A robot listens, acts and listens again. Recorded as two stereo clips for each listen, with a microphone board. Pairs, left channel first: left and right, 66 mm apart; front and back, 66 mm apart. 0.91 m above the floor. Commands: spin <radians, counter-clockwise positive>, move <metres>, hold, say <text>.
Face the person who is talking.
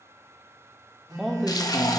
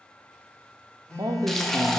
spin 3.14
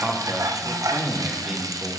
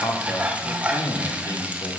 spin -0.26
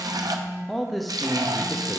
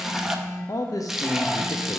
say Facing the man speaking.